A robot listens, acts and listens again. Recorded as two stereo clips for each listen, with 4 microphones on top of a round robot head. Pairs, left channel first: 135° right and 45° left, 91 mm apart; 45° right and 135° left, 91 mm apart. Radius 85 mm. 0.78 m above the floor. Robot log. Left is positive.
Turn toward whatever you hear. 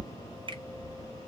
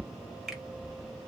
note: The finger snap: 45° left.
cmd yaw +45
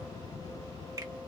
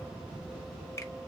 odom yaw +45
cmd idle
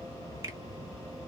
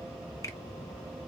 cmd idle
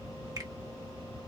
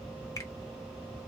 end: Facing where the finger snap came from. I can't hear it now.